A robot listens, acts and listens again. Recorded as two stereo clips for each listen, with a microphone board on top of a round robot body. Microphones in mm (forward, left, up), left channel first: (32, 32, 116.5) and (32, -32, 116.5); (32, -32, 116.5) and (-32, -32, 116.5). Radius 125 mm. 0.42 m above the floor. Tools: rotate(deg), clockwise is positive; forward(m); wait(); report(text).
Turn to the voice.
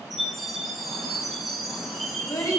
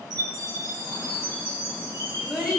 rotate(-105)
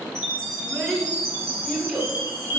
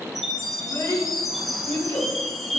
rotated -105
rotate(-10)
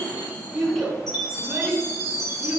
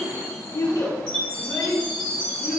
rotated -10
report("Facing the child speaking, over 4 m away.")